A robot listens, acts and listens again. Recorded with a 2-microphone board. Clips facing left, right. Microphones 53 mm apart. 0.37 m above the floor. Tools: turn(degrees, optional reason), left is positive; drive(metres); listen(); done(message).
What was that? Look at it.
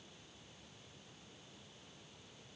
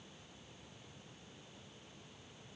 listen()
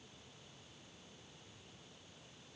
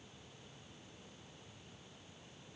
listen()
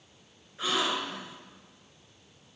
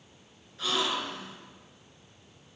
turn(degrees=25, reason="The gasp: about 25° left or 155° left.")
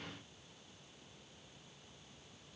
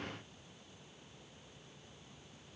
listen()
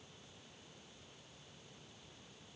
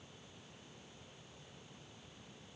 done("I heard a gasp, but can't make it out now. It was about straight ahead or 130° left.")